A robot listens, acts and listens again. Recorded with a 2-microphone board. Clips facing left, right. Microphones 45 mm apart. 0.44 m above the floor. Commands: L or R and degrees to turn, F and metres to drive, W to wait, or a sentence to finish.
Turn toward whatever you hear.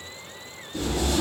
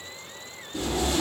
R20
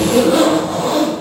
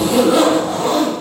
Found it: a zipper, straight ahead.